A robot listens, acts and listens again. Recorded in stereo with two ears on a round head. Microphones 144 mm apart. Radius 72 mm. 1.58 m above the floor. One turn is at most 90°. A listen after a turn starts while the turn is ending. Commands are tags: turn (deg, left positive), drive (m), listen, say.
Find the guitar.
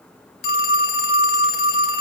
<listen/>
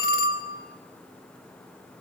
<listen/>
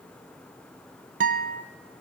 <turn deg="-55"/>
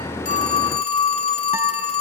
<listen/>
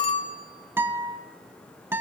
<turn deg="-20"/>
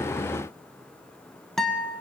<say>Found it: a guitar, straight ahead.</say>